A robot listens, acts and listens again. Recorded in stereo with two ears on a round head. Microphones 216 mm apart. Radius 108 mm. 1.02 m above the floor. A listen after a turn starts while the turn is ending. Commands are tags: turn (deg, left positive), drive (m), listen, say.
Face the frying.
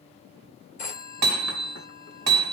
<listen/>
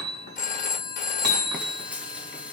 <turn deg="-30"/>
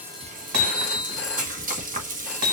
<turn deg="-145"/>
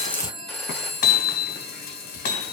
<turn deg="40"/>
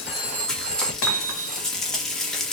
<say>Found it: frying, straight ahead.</say>